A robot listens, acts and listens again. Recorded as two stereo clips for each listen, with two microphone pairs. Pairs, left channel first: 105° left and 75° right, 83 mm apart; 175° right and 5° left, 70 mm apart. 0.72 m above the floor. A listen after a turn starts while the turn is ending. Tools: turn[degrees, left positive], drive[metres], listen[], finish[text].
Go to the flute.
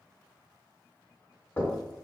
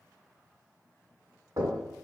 Action: listen[]
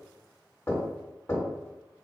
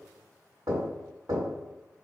Action: listen[]
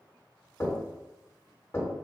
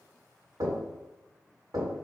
Action: finish[I can't make out a flute, only knocking.]